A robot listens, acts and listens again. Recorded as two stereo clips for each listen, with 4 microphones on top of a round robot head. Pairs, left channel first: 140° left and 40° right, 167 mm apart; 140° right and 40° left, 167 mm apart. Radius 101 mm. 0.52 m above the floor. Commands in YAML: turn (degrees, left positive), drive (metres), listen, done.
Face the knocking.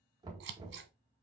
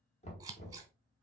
turn: -100
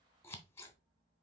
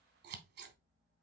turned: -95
listen: true
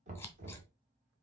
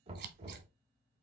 done: "Found it: knocking, straight ahead."